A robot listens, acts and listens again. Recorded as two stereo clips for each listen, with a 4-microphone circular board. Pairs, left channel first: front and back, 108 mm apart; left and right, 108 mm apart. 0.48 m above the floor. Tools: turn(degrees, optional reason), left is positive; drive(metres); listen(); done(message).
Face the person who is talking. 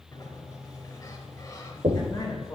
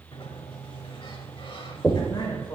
turn(degrees=55, reason="The man speaking: 55° left.")
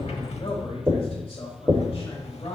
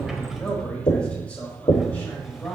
turn(degrees=25, reason="The man speaking is now 25° left.")
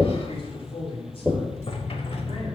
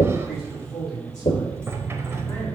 turn(degrees=15, reason="The man speaking is now 15° left.")
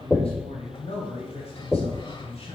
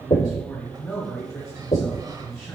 done("Found it: a man speaking, straight ahead.")